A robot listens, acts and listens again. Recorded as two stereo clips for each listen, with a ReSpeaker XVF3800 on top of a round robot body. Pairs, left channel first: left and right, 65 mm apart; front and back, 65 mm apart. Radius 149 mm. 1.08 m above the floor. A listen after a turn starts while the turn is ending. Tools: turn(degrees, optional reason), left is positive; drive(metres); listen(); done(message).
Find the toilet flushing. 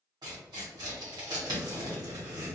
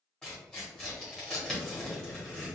listen()
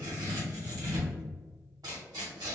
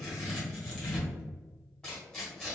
listen()
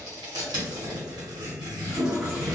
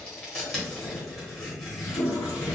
done("Facing the toilet flushing.")